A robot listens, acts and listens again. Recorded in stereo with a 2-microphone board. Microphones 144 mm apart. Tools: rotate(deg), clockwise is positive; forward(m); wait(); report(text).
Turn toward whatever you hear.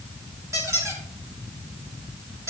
rotate(20)
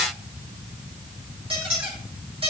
rotate(140)
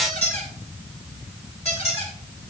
rotate(-50)
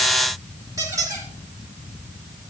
rotate(20)
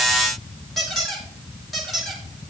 report("Found it: a squeak, straight ahead, 2 to 4 m away.")